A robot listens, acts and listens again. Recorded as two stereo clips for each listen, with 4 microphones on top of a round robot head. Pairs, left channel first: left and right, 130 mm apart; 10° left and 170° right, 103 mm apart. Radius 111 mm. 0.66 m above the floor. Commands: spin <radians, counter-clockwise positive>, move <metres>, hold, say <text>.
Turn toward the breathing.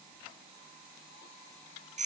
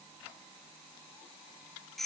hold
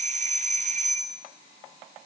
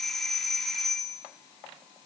hold
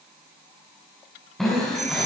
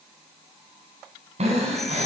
spin 3.14
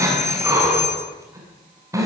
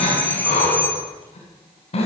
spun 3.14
spin -0.44
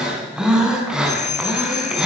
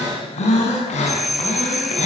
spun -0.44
say Found it: breathing, straight ahead, over 4 m away.